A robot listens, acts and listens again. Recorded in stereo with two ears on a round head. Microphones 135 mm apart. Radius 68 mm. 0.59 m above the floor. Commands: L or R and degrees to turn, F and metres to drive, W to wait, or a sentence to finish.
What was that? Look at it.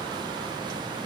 W
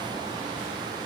W
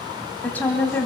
L30
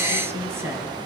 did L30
R15
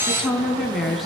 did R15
Facing the woman speaking, over 4 m away.